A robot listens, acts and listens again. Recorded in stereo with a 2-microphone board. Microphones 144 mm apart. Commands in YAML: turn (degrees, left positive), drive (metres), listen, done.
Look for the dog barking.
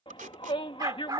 turn: -30
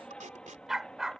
done: "Found it: a dog barking, straight ahead."